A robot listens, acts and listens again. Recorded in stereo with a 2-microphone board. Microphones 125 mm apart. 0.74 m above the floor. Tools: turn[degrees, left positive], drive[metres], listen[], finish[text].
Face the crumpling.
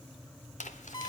Thought: The crumpling: about 75° left or 105° left.
Action: turn[75]
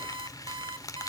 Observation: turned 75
Thought: So it is at 30° left.
Action: turn[30]
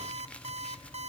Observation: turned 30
Action: listen[]
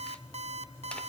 Action: listen[]
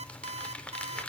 Thought: The crumpling is now 10° left.
Action: turn[10]
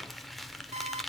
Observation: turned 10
Action: finish[Facing the crumpling.]